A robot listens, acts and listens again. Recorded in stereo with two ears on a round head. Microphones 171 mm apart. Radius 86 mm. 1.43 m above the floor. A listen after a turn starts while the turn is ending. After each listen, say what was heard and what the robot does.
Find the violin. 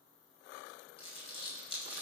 Keep listening.
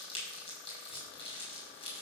Keep listening.
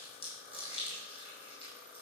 I can't make out a violin to turn to.